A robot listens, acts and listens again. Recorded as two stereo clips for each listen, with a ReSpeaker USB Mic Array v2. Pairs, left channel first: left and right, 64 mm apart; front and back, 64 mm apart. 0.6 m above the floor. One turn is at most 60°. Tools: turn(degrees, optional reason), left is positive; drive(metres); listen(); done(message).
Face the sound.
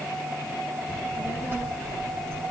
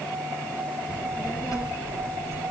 turn(degrees=-40, reason="The child speaking: 40° right.")
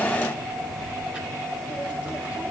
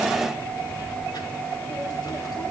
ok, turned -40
turn(degrees=-20, reason="The child speaking is now 20° right.")
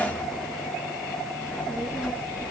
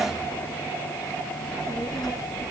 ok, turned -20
turn(degrees=-10, reason="The child speaking is now 10° right.")
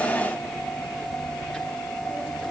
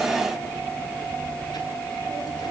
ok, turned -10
done("Found it: a child speaking, straight ahead, over 4 m away.")